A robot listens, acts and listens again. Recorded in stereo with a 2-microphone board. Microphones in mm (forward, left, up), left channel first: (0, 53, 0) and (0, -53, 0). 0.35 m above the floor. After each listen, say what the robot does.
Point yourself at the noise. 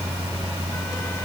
Keep listening.
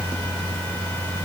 Keep listening.
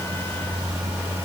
I can't make out anything.